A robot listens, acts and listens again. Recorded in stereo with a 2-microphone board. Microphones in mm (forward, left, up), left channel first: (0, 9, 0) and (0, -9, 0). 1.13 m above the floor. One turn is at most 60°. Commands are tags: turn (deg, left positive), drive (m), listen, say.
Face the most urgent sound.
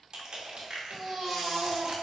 <turn deg="30"/>
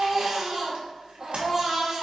<turn deg="-25"/>
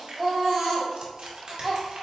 <say>Facing the baby crying, 1 to 2 m away.</say>